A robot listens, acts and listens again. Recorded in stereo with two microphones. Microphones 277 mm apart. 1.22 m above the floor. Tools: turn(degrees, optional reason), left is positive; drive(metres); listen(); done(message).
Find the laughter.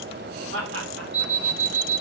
turn(degrees=-50, reason="The laughter: about 50° right or 130° right.")
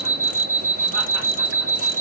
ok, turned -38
listen()
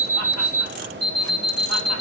listen()
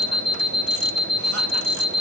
done("I heard laughter, but can't make it out now. It was about 10° right or 95° right.")